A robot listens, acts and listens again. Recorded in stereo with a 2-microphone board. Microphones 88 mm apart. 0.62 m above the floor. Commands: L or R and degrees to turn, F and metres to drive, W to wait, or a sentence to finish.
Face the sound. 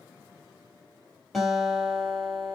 L30
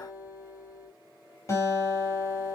L145
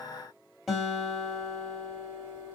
Found it: a guitar, straight ahead.